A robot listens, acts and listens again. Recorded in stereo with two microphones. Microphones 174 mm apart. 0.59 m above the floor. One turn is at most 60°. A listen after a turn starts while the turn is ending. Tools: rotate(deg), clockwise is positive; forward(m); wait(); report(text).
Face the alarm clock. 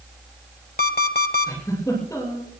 rotate(-60)
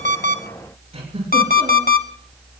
rotate(-60)
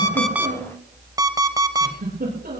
rotate(20)
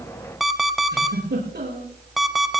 report("Found it: an alarm clock, straight ahead.")